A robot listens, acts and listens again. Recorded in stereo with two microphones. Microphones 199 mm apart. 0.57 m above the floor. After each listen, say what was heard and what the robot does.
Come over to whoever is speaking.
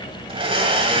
Keep listening.
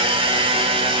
Keep listening.
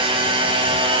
I can't make out anyone speaking to turn to.